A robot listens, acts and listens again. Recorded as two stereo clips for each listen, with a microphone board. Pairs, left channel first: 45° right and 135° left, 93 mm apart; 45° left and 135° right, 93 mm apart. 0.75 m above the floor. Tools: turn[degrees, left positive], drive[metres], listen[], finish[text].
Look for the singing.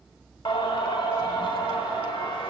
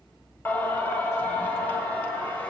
Thought: The singing: 25° right.
Action: turn[-25]
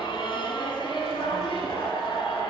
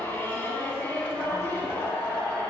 Thought: The singing is now 25° right.
Action: turn[-25]
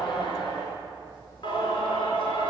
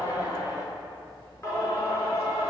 Thought: The singing is now 10° right.
Action: turn[-10]
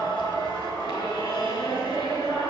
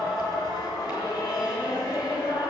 Action: finish[Facing the singing, over 4 m away.]